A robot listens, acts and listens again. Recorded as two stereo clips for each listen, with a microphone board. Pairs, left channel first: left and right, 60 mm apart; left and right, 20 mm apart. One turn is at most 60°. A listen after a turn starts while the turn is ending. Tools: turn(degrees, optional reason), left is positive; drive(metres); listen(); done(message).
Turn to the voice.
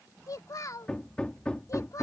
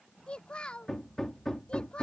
turn(degrees=60, reason="The child speaking: about 65° left or 115° left.")
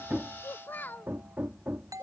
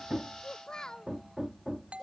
turn(degrees=40, reason="So it is at 40° left.")
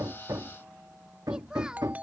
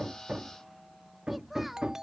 turn(degrees=-15, reason="The child speaking is now 15° right.")
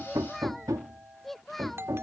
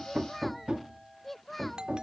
done("Found it: a child speaking, straight ahead.")